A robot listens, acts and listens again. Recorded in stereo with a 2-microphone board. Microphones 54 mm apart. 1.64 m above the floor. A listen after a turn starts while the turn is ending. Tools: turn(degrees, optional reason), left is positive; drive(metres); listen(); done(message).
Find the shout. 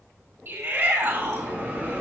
turn(degrees=-50, reason="The shout: about 50° right or 130° right.")
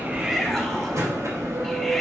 listen()
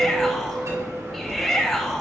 done("Facing the shout.")